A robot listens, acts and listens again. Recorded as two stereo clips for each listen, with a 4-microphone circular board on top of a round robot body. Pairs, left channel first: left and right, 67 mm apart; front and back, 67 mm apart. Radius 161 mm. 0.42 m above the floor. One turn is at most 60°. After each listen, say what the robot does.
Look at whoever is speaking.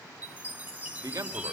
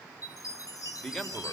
Turn 60° right.
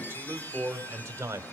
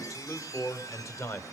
Turn 45° right.
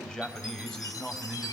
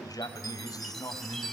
Turn 10° left.
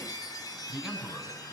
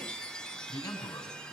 Found it: a man speaking, straight ahead.